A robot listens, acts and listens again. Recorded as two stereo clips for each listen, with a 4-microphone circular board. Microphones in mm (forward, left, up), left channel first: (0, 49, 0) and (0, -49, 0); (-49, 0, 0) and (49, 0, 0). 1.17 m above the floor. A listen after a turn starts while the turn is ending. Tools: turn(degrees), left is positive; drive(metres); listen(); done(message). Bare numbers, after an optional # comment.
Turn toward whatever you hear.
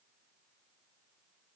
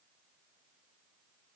listen()
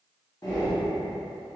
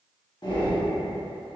# The breathing: 140° left.
turn(140)
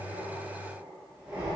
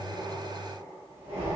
# The breathing is now 10° right.
turn(-10)
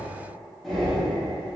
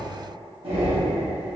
done("Facing the breathing.")